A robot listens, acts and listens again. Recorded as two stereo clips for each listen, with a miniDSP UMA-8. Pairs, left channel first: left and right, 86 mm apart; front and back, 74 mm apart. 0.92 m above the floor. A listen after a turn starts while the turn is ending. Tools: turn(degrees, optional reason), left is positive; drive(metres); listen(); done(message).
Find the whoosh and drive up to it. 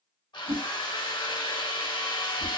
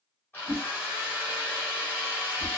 turn(degrees=-85, reason="The whoosh: 85° right.")
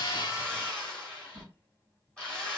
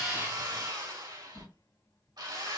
turn(degrees=25, reason="The whoosh is now 25° left.")
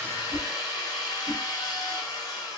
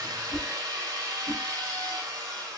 turn(degrees=-10, reason="The whoosh is now 10° right.")
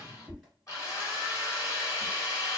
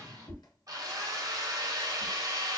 drive(metres=1.0)
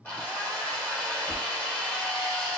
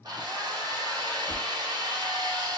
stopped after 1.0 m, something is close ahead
listen()
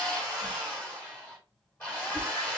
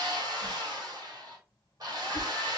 done("I am next to the whoosh.")